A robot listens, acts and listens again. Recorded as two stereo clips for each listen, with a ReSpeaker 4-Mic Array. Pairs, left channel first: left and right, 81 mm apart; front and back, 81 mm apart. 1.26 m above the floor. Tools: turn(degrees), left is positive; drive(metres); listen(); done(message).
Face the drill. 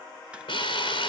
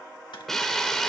turn(degrees=85)
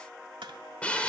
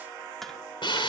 turn(degrees=15)
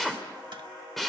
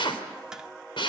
done("Facing the drill, 2 to 4 m away.")